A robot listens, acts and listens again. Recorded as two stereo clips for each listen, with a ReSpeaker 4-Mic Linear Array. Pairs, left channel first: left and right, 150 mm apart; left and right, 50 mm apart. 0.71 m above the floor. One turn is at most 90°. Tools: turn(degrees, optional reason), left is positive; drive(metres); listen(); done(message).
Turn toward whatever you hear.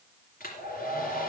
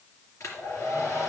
turn(degrees=90)
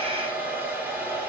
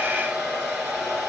turn(degrees=-10, reason="So it is at 10° right.")
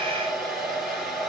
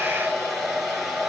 done("Found it: a hair dryer, straight ahead.")